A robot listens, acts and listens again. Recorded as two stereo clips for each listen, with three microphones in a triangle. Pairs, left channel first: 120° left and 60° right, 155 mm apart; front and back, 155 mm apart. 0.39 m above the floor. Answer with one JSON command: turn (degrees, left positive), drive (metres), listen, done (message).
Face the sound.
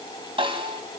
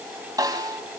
{"turn": -115}
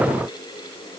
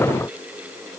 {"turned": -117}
{"listen": true}
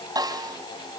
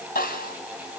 {"done": "Found it: a snare drum, straight ahead."}